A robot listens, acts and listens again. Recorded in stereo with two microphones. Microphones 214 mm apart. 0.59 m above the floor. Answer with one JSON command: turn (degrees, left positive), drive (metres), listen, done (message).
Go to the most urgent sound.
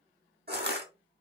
{"listen": true}
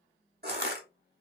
{"listen": true}
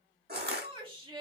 {"turn": -25}
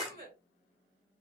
{"turn": -130}
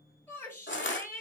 {"turn": 15}
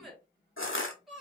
{"drive": 1.0}
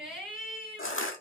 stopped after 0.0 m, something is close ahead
{"done": "Something is in my way. I am facing the shout but have not reached it."}